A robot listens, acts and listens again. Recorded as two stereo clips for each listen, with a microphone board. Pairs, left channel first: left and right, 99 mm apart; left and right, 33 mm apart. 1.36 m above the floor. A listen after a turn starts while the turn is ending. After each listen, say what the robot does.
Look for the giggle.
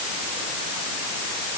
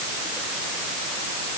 Keep listening.
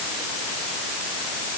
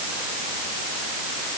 Keep listening.
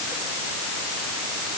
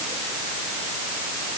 I can't make out a giggle to turn to.